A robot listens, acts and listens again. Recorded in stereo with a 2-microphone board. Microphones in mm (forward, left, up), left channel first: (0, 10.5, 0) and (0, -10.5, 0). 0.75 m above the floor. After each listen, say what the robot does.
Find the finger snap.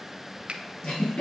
Turn 60° right.
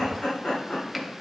Keep listening.
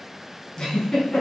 Keep listening.
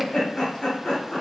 I heard a finger snap, but can't make it out now. It was about straight ahead or 60° right.